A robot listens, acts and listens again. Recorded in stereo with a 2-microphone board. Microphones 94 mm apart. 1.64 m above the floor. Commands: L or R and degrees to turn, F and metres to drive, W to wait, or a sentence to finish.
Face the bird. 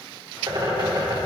R50
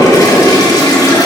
W
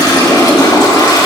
W
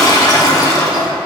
I heard a bird, but can't make it out now. It was about straight ahead or 80° right.